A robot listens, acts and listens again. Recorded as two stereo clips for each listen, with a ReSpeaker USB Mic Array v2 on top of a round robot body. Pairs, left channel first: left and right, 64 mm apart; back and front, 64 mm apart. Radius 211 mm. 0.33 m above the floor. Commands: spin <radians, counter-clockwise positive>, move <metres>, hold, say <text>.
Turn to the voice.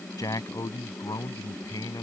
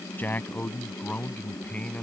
spin 1.83
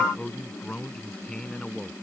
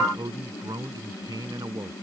spin 0.17
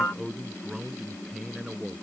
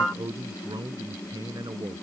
say Facing the man speaking.